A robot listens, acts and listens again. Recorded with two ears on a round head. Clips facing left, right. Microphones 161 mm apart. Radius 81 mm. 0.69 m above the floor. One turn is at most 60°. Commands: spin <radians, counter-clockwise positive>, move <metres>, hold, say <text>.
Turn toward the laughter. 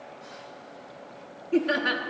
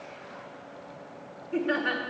spin 0.87
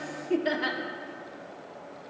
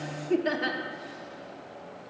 say Found it: laughter, straight ahead, 1 to 2 m away.